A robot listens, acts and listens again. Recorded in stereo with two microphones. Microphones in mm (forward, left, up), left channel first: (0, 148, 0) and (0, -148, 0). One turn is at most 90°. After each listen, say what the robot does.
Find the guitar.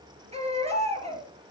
Keep listening.
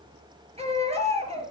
Keep listening.
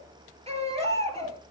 I can't make out a guitar to turn to.